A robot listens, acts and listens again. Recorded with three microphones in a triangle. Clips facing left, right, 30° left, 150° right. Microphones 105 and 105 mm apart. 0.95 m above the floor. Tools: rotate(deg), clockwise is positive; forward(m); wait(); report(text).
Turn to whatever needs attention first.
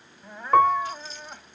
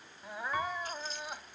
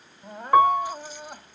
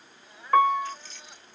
report("Found it: crying, straight ahead.")